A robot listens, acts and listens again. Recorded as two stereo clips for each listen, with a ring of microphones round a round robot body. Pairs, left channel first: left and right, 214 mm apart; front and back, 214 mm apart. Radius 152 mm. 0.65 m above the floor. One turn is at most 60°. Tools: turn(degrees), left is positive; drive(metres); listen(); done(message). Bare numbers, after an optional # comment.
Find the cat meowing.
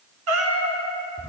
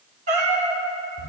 # The cat meowing: 110° right.
turn(-60)
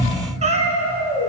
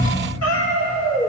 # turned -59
# The cat meowing is now 25° right.
turn(-25)
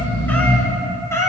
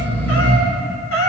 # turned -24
# The cat meowing is now 15° left.
turn(15)
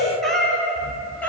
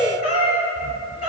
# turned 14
done("Found it: a cat meowing, straight ahead, 2 to 4 m away.")